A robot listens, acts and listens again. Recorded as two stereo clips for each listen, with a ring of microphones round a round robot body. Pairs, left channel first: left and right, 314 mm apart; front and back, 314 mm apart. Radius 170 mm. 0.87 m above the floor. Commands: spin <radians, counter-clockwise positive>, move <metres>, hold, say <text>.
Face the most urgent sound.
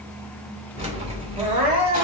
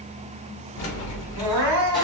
spin -2.36
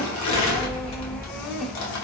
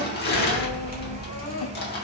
say Facing the crying.